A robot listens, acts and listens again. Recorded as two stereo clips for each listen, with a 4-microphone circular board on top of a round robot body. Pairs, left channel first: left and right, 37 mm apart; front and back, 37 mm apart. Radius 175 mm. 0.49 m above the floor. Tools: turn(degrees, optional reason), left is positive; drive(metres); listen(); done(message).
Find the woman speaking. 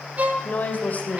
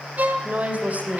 turn(degrees=140, reason="The woman speaking: 140° left.")
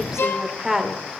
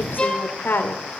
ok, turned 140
done("Found it: a woman speaking, straight ahead.")